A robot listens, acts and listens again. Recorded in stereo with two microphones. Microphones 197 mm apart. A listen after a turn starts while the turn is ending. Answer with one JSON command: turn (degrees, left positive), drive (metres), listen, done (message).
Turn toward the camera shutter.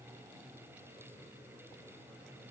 {"listen": true}
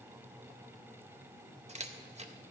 {"turn": -35}
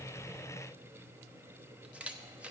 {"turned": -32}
{"done": "Found it: a camera shutter, straight ahead, under 1 m away."}